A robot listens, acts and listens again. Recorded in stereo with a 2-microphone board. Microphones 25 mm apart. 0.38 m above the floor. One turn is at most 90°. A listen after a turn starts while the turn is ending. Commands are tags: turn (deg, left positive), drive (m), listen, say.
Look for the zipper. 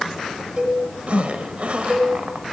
<turn deg="-55"/>
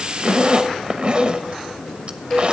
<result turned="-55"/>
<turn deg="-50"/>
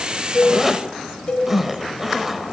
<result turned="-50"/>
<turn deg="-15"/>
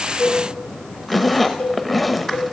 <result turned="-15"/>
<say>Found it: a zipper, straight ahead.</say>